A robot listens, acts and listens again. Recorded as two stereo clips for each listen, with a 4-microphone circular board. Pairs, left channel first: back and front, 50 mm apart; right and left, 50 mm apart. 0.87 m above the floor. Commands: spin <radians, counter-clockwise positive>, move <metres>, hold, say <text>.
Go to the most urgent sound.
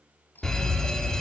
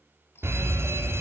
spin 1.83
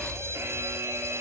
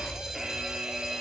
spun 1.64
spin 0.17
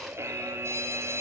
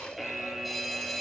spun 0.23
move 1.0
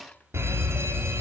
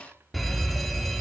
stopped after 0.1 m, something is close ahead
say Something is in my way. I am facing the fire alarm but have not reached it.